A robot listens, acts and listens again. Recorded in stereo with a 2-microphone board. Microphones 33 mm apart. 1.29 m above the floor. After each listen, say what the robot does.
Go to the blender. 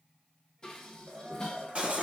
Turn 70° right.
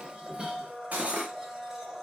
Turn 25° right.
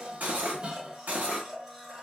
Turn 20° right.
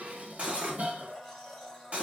Drive 1.0 m forward.
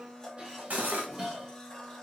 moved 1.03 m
Turn 15° left.
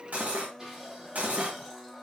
Drive 1.0 m forward.
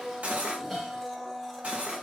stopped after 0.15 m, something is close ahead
I am next to the blender.